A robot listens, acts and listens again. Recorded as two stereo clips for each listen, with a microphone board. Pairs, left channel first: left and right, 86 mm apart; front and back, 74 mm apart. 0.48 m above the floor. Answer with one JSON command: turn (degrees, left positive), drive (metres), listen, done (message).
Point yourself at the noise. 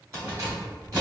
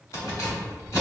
{"turn": -45}
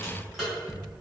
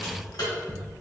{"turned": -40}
{"done": "Found it: keys jangling, straight ahead."}